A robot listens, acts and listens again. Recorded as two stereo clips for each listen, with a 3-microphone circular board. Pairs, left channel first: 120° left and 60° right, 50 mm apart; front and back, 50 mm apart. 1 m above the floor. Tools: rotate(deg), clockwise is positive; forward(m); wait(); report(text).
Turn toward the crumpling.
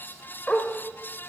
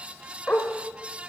wait()
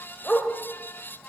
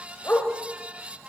wait()
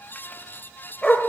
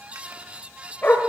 report("I can't make out crumpling to turn to.")